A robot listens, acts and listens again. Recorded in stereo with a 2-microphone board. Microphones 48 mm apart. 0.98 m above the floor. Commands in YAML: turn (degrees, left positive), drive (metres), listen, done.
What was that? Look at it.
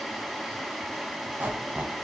turn: -45
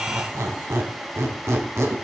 turn: -85
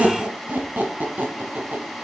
turn: -40
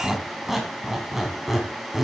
done: "Found it: a squeak, straight ahead."